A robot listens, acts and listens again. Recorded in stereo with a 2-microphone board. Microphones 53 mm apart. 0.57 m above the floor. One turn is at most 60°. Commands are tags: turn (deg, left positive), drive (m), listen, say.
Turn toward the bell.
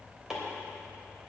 <listen/>
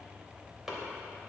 <listen/>
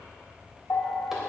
<turn deg="45"/>
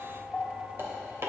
<say>Found it: a bell, straight ahead.</say>